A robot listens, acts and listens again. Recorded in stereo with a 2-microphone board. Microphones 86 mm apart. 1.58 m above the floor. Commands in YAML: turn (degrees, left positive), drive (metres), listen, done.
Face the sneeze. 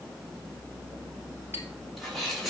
turn: 30
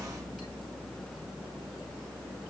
listen: true
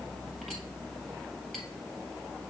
done: "I heard a sneeze, but can't make it out now. It was about 30° right or 150° left."